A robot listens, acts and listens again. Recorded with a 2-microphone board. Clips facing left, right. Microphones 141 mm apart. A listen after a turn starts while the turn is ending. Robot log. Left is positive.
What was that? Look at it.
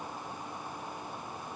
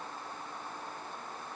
cmd idle
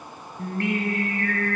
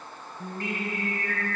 note: The singing: about 70° left or 110° left.
cmd yaw +70
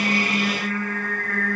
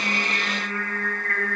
end: Facing the singing.